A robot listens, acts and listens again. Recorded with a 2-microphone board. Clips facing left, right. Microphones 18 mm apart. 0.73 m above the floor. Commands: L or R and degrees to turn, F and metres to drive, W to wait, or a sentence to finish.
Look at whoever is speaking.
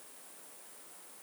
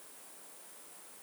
W
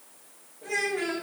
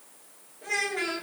R30
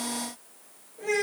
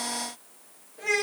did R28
R120
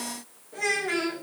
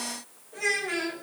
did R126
L10
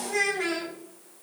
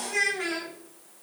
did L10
Facing the child speaking, under 1 m away.